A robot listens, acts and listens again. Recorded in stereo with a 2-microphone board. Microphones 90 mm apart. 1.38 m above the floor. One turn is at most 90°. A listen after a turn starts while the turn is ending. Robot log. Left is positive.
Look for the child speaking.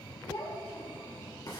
cmd yaw +90
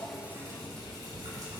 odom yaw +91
cmd idle
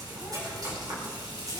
cmd idle
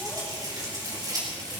end: Facing where the child speaking came from. I can't hear it now.